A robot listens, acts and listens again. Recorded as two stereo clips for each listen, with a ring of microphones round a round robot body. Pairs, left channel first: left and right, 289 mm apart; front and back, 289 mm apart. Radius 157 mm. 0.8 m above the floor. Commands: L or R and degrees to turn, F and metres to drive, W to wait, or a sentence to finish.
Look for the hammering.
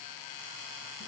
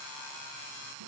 W
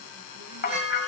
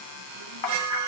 L30
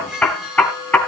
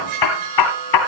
Facing the hammering, 2 to 4 m away.